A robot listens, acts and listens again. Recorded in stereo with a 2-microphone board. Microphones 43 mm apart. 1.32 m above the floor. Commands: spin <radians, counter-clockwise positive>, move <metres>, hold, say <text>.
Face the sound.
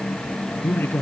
spin 0.96
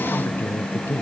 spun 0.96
spin 1.22
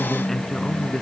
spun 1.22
spin 0.17
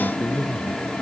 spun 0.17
say Found it: a man speaking, straight ahead.